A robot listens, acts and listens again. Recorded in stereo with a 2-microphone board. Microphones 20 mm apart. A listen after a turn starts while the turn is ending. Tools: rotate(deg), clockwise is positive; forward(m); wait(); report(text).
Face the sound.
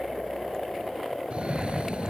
rotate(75)
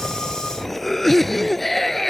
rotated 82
rotate(-10)
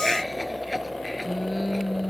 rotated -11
report("Facing the cough.")